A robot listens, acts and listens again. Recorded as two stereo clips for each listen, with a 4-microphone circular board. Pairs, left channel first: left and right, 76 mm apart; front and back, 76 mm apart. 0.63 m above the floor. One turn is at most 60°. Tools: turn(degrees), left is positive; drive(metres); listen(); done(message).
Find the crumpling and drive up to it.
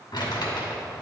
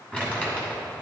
turn(degrees=60)
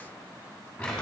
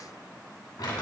turn(degrees=15)
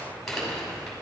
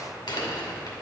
drive(metres=1.0)
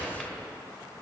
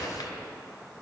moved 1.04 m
drive(metres=1.0)
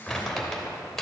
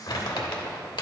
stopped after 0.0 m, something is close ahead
done("I am next to the crumpling.")